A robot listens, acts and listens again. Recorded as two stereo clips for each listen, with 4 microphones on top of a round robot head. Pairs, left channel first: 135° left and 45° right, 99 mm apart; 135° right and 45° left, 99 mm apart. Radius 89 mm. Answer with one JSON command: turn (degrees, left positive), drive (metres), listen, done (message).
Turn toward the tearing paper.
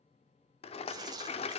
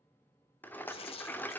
{"turn": -100}
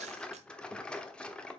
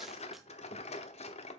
{"listen": true}
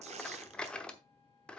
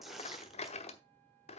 {"turn": -40}
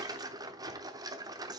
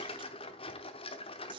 {"done": "Found it: tearing paper, straight ahead, under 1 m away."}